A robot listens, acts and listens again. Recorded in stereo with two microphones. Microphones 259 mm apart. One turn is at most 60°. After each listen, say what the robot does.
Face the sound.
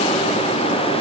Keep listening.
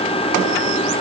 Keep listening.
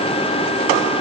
I can't make out anything.